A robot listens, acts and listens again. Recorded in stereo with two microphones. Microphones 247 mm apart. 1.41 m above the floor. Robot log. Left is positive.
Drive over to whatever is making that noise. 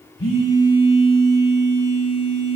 note: The phone buzzing: about 55° left or 125° left.
cmd yaw +55
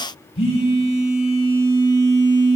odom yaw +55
note: So it is at 60° left.
cmd yaw +60
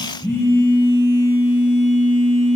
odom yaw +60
note: The phone buzzing is now 15° left.
cmd yaw +15
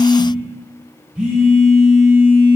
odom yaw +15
cmd fwd 1.0
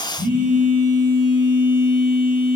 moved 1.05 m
cmd fwd 1.0
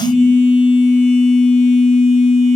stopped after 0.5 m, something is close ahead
end: Arrived at the phone buzzing, straight ahead.